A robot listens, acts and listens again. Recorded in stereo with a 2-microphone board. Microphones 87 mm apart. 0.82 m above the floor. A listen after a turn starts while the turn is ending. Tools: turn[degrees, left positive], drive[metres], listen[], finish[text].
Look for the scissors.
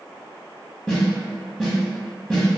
Action: listen[]
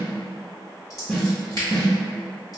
Thought: The scissors: about 40° left or 140° left.
Action: turn[40]
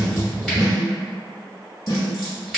Action: finish[Found it: scissors, straight ahead, 1 to 2 m away.]